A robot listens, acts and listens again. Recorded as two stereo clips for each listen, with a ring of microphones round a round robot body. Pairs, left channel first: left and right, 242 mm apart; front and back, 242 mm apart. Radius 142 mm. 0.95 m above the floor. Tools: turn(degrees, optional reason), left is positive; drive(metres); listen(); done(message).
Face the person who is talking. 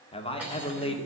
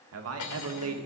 turn(degrees=155, reason="The man speaking: 155° left.")
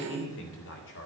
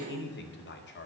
turn(degrees=45, reason="The man speaking is now 45° left.")
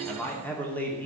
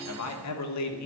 done("Found it: a man speaking, straight ahead, 2 to 4 m away.")